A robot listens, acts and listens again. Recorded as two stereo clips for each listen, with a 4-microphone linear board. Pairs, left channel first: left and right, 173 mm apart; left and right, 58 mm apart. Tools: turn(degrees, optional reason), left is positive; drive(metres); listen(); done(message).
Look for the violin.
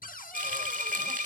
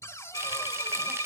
turn(degrees=90)
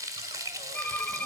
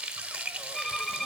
turn(degrees=10, reason="So it is at 10° left.")
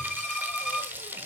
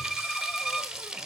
done("Facing the violin.")